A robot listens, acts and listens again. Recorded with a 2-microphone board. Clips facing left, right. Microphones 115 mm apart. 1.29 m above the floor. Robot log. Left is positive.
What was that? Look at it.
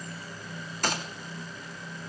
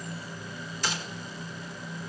note: The gunshot: about 55° left or 125° left.
cmd yaw +55
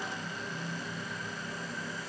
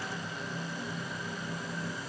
cmd idle
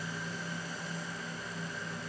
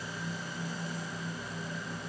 end: I heard a gunshot, but can't make it out now. It was about straight ahead or 70° left.